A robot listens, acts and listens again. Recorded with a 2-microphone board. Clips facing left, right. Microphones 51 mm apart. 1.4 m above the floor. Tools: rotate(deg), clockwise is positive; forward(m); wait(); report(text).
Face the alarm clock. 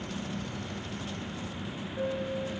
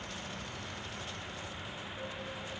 wait()
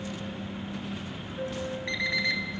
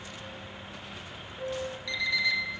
rotate(-40)
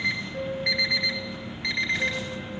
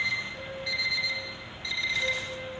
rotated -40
rotate(-90)
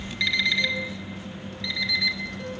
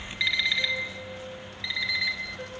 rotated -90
rotate(15)
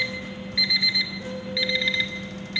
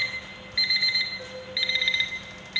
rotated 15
report("Found it: an alarm clock, straight ahead.")